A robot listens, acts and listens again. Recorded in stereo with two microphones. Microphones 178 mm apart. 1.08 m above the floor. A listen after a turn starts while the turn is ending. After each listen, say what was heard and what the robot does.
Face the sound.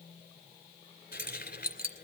The keys jangling: about 60° left or 120° left. Turn 60° left.
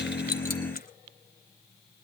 Keep listening.
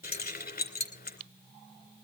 So it is at 60° left. Turn 60° left.
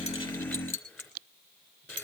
The keys jangling is now 10° left. Turn 10° left.
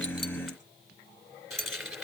Found it: keys jangling, straight ahead.